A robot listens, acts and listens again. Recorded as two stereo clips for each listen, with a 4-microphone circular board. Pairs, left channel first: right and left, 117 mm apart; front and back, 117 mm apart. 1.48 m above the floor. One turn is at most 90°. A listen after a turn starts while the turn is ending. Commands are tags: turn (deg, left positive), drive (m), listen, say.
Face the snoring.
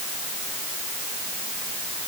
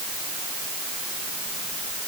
<listen/>
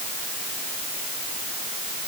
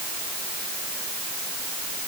<listen/>
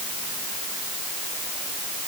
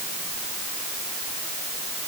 <say>I can't make out snoring.</say>